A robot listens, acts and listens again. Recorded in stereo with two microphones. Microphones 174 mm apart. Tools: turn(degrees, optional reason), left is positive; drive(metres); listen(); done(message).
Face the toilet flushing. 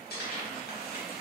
listen()
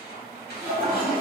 turn(degrees=-30)
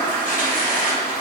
turn(degrees=15, reason="So it is at 15° left.")
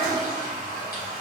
done("Found it: a toilet flushing, straight ahead.")